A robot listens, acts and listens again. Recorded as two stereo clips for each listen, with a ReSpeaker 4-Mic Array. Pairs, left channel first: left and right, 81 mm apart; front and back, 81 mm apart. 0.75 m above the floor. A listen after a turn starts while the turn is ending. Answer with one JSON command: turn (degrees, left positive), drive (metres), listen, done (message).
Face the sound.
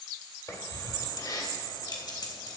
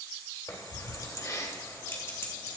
{"turn": 60}
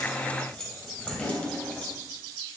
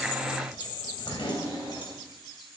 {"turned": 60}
{"turn": 20}
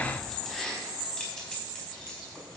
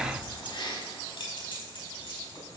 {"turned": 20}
{"turn": 15}
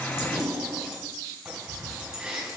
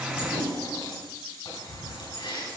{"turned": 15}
{"done": "Found it: keys jangling, straight ahead, over 4 m away."}